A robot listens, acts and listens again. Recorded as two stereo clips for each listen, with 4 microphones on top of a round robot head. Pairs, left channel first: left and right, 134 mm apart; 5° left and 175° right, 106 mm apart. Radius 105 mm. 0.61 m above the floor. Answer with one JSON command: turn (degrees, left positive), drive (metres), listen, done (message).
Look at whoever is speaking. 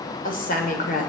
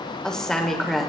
{"turn": 95}
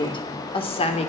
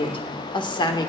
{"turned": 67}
{"turn": 50}
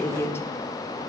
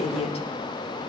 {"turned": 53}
{"turn": 20}
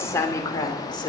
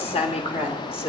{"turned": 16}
{"turn": 35}
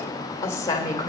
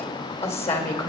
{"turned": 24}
{"turn": 25}
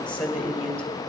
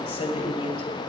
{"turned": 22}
{"done": "Found it: a woman speaking, straight ahead, 2 to 4 m away."}